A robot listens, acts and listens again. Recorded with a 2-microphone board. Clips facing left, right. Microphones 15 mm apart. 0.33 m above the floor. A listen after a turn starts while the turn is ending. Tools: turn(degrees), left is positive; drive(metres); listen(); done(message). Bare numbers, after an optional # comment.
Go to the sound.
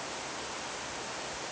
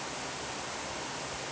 listen()
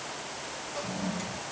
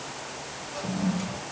turn(30)
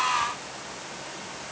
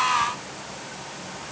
listen()
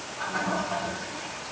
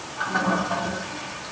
# So it is at 30° right.
turn(-30)
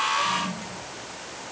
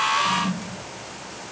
# The toilet flushing is now 10° right.
turn(-10)
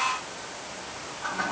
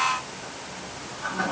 drive(1.0)
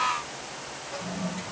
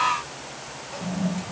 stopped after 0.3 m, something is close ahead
# The toilet flushing is now 10° left.
turn(10)
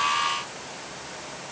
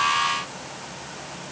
listen()
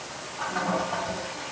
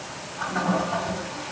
done("Something is in my way. I am facing the toilet flushing but have not reached it.")